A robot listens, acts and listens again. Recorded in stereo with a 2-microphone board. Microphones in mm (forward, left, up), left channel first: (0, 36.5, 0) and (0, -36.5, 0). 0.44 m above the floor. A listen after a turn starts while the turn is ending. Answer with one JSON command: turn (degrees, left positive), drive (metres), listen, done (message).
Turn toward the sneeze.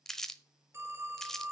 {"listen": true}
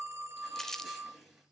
{"turn": -30}
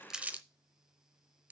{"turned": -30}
{"listen": true}
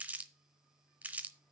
{"done": "I heard a sneeze, but can't make it out now. It was about 25° left or 145° right."}